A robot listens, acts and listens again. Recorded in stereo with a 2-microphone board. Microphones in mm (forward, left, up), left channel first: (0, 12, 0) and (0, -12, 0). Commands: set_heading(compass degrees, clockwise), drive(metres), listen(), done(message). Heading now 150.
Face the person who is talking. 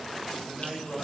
set_heading(175)
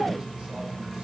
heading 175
listen()
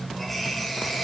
listen()
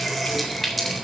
done("I heard a man speaking, but can't make it out now. It was about straight ahead or 130° right.")